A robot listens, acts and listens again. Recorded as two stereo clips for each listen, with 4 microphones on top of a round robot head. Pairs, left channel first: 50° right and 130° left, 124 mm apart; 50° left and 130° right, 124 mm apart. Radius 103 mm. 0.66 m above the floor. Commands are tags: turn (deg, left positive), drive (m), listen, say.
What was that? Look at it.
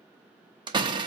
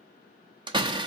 <turn deg="180"/>
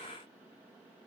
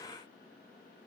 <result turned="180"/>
<say>I heard a door slam from this way, but can't make it out now.</say>